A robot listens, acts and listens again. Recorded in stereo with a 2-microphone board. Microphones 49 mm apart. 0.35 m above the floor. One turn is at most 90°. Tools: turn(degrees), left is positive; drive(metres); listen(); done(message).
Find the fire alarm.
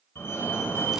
turn(degrees=55)
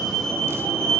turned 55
done("Facing the fire alarm.")